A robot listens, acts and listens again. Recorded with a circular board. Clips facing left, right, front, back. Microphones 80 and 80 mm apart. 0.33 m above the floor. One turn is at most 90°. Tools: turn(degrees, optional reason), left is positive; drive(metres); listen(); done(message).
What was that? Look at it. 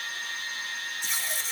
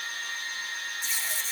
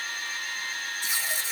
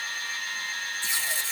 turn(degrees=75, reason="The tape being pulled: 75° left.")
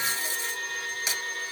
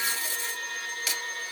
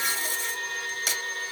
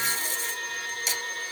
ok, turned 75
turn(degrees=20, reason="The tape being pulled is now 20° left.")
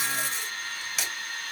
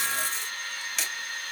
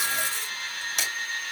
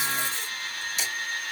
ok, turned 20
done("Facing the tape being pulled, 2 to 4 m away.")